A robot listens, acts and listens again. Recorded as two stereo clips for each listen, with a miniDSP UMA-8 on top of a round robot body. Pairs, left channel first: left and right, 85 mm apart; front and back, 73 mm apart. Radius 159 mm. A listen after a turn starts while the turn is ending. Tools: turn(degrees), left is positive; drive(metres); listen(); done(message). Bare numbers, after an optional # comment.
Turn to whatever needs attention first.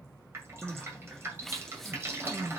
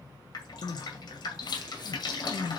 done("Found it: crying, straight ahead.")